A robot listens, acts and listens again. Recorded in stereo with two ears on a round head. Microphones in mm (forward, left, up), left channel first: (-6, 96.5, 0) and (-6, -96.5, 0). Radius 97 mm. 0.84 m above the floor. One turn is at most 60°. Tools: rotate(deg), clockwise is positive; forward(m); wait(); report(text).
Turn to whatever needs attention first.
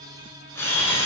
wait()
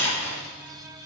wait()
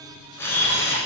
report("I can't make out anything urgent to turn to.")